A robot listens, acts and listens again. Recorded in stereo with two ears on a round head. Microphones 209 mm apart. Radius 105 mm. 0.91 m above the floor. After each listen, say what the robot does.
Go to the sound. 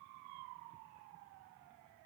Keep listening.
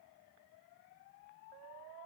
Keep listening.
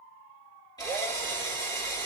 Turn 15° left.
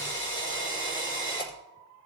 Turn 145° left.
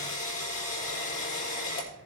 Turn 30° left.
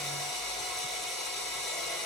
Drive 1.0 m forward.
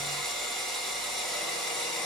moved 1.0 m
Drive 1.0 m forward.
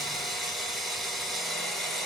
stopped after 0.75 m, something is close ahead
I am next to the drill.